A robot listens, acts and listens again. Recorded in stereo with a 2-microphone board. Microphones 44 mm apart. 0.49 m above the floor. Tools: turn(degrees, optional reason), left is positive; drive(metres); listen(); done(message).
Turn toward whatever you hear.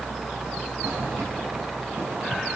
listen()
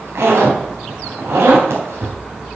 turn(degrees=-75, reason="The zipper: about 75° right or 105° right.")
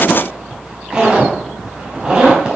turn(degrees=-25, reason="So it is at 25° right.")
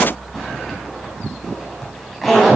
done("Facing the zipper, 2 to 4 m away.")